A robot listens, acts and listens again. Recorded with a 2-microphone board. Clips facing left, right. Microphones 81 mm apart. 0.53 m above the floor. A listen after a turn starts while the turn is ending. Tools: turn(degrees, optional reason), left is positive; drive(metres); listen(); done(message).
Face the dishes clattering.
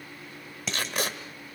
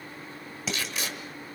turn(degrees=-30)
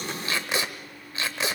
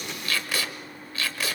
listen()
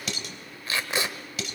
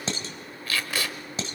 turn(degrees=-145, reason="So it is at 145° right.")
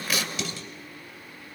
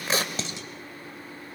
listen()
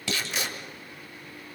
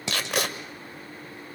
turn(degrees=-20, reason="The dishes clattering is now 20° right.")
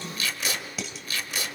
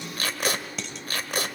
done("Facing the dishes clattering, 2 to 4 m away.")